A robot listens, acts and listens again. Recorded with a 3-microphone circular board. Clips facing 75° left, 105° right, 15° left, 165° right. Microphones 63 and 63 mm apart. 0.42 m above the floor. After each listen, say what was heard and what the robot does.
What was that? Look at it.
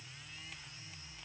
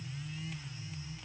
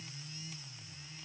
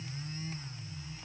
Keep listening.
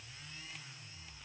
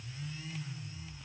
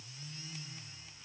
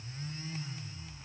Keep listening.
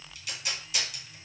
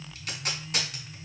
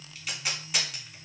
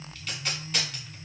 The tape being pulled: 65° right. Turn 65° right.
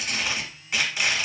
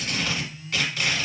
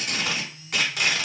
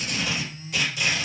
Facing the tape being pulled.